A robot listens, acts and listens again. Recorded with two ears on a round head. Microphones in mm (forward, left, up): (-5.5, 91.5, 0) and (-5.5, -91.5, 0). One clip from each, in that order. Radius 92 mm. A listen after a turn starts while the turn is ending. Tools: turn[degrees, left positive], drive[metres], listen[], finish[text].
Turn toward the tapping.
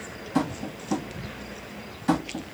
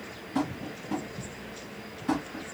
Thought: The tapping: about 60° left or 120° left.
Action: turn[60]
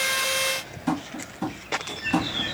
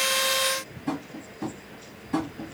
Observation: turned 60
Thought: So it is at 35° left.
Action: turn[35]
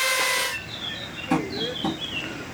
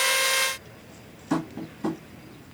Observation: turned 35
Action: finish[Found it: tapping, straight ahead, 1 to 2 m away.]